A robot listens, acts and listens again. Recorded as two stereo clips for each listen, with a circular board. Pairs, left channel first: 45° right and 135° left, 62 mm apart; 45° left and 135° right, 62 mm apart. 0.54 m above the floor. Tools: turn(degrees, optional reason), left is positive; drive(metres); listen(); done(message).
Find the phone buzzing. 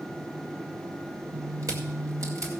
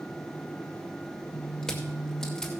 turn(degrees=155, reason="The phone buzzing: 155° left.")
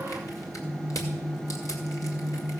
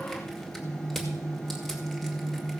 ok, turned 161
done("Facing the phone buzzing, 1 to 2 m away.")